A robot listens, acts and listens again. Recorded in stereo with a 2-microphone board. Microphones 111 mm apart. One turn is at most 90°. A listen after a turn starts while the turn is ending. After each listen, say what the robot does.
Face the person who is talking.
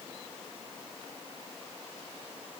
Keep listening.
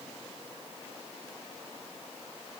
Keep listening.
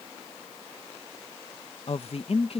Turn 60° left.
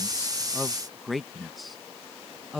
Facing the woman speaking.